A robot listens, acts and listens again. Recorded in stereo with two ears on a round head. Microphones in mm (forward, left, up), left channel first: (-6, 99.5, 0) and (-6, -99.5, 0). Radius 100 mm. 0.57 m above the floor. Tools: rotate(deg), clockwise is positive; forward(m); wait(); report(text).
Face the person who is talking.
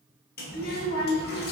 rotate(-40)
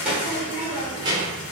rotate(25)
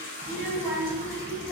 rotate(20)
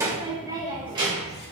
rotate(25)
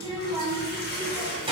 rotate(25)
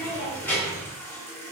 rotate(-10)
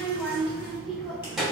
report("Found it: a child speaking, straight ahead, 2 to 4 m away.")